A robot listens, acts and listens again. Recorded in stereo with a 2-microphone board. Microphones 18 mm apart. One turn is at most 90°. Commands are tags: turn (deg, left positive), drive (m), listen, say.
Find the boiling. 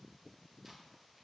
<listen/>
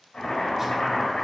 <turn deg="90"/>
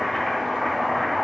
<say>Facing the boiling.</say>